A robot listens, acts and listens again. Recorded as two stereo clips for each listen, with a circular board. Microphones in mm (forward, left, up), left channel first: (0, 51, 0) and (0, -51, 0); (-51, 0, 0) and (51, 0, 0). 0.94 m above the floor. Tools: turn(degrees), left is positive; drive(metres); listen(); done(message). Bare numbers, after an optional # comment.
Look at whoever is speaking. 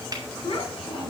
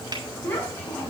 # The child speaking: 110° left.
turn(110)
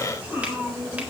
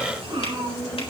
# The child speaking is now 15° right.
turn(-15)
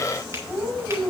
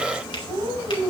done("Found it: a child speaking, straight ahead, 2 to 4 m away.")